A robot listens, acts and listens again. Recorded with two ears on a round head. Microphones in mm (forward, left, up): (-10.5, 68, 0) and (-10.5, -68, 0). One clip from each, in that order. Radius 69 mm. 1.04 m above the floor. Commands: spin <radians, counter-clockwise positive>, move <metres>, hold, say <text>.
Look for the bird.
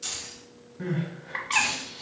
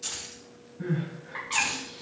spin 0.79
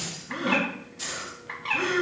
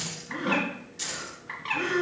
say Facing the bird, 1 to 2 m away.